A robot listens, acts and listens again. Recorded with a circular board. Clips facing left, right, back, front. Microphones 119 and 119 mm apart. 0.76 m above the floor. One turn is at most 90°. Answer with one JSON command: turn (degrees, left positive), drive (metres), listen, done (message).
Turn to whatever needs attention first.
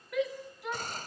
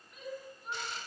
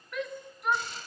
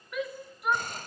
{"turn": 85}
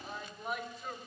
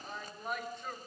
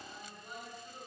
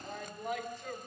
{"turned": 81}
{"done": "Found it: a shout, straight ahead."}